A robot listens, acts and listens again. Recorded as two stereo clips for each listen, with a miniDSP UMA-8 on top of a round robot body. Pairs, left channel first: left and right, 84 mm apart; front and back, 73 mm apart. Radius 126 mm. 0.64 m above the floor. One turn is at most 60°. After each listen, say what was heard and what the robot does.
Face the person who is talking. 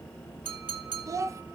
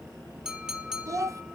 The child speaking: 140° right. Turn 60° right.
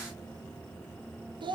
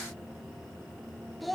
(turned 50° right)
The child speaking is now 90° right. Turn 60° right.
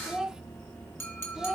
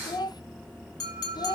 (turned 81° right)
The child speaking is now 10° right. Turn 10° right.
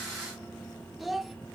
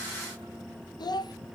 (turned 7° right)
Found it: a child speaking, straight ahead, under 1 m away.